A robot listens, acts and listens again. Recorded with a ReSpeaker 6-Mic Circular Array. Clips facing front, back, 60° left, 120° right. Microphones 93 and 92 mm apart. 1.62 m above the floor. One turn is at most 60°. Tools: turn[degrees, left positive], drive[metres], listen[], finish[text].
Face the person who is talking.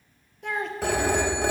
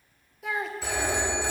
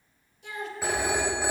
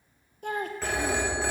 Thought: The child speaking: 95° right.
Action: turn[-60]
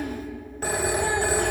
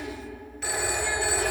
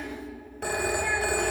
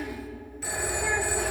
Thought: The child speaking is now 35° right.
Action: turn[-35]
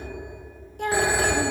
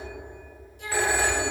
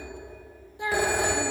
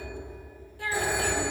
Action: finish[Found it: a child speaking, straight ahead.]